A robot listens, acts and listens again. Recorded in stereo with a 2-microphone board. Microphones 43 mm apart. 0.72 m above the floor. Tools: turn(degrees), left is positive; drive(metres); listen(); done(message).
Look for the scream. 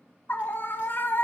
turn(degrees=50)
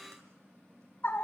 turn(degrees=65)
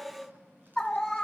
turn(degrees=15)
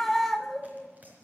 done("Found it: a scream, straight ahead.")